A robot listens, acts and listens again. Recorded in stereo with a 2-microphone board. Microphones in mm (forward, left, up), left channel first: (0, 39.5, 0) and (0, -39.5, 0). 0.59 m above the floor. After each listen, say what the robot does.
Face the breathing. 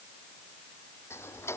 Keep listening.
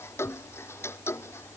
Keep listening.
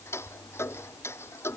I can't make out breathing, only ticking.